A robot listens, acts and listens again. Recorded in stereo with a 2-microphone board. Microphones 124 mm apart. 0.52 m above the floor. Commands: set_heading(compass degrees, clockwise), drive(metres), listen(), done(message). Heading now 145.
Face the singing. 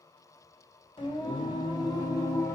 set_heading(125)
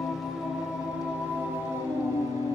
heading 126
set_heading(156)
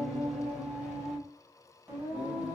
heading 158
set_heading(173)
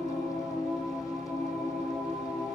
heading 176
done("Found it: singing, straight ahead, 2 to 4 m away.")